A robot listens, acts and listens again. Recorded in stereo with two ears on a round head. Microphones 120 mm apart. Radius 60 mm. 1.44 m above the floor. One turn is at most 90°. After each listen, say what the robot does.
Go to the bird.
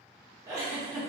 Keep listening.
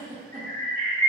Turn 65° right.
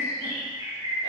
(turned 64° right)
Turn 15° right.
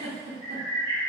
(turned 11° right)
Drive 1.0 m forward.
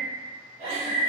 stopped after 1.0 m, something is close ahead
Turn 10° right.
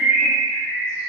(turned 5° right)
Arrived at the bird, straight ahead.